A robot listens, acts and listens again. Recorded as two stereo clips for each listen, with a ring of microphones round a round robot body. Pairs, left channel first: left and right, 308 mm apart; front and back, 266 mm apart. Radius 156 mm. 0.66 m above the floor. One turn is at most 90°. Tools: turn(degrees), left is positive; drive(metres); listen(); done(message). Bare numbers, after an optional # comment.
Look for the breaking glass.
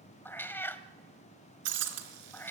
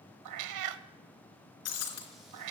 # The breaking glass: 45° right.
turn(-45)
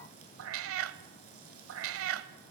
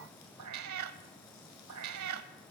done("Facing where the breaking glass came from. I can't hear it now.")